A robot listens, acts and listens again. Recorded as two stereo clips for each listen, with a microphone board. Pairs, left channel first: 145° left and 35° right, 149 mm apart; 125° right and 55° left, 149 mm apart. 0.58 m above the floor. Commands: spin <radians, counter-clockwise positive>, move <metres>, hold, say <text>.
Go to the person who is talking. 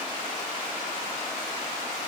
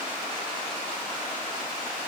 hold
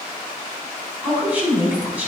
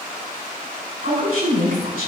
spin 0.79
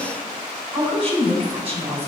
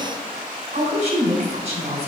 spin 0.17
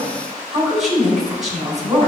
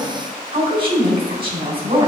move 1.0
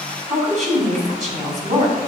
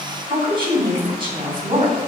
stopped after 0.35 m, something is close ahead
say Blocked. The woman speaking is further on, straight ahead.